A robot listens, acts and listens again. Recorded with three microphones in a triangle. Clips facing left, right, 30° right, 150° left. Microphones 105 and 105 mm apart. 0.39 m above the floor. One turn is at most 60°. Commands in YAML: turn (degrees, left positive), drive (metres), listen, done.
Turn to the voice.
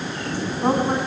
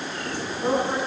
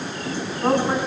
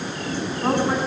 turn: 50
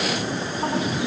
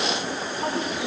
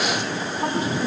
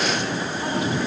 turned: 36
turn: 15
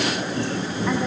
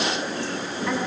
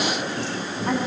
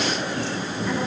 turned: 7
turn: 10
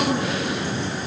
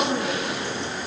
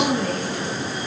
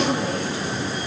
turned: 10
done: "I heard a woman speaking from this way, but can't make it out now."